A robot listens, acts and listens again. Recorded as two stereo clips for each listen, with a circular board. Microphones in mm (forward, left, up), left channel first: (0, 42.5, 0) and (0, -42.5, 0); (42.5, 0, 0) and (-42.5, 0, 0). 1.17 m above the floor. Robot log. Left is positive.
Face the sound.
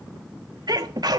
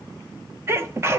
note: The sneeze: 125° right.
cmd yaw -125
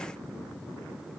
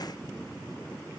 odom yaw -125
end: I heard a sneeze from this way, but can't make it out now.